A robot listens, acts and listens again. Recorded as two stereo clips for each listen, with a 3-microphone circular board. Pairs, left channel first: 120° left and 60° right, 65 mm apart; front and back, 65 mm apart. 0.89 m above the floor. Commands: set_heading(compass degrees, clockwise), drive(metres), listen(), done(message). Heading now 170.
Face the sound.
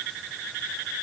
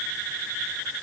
listen()
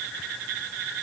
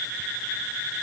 listen()
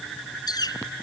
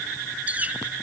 set_heading(60)
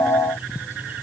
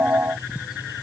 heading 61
listen()
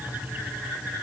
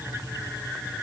listen()
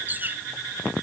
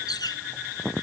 done("Found it: a bird, straight ahead.")